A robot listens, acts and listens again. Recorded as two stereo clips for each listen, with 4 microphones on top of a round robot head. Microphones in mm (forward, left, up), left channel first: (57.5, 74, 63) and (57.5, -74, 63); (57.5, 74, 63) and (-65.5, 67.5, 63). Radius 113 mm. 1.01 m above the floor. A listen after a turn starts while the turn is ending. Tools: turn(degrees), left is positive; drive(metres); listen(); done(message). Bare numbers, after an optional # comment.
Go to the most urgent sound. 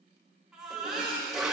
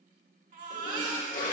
# The baby crying: 175° right.
turn(-175)
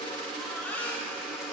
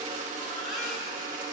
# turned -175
# The baby crying is now 15° left.
turn(15)
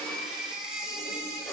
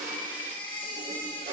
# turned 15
drive(1.0)
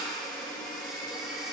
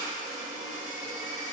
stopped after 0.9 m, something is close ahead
listen()
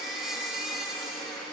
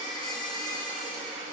done("Something is in my way. I am facing the baby crying but have not reached it.")